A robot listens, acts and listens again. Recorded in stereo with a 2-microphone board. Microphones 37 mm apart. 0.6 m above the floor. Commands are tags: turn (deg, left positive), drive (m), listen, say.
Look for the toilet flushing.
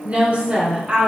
<listen/>
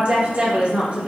<listen/>
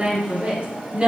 <say>I can't make out a toilet flushing to turn to.</say>